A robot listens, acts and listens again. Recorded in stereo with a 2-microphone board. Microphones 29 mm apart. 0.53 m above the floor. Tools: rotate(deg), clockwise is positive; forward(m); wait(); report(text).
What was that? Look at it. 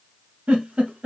rotate(55)
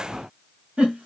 rotate(60)
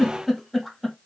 report("Facing the giggle, under 1 m away.")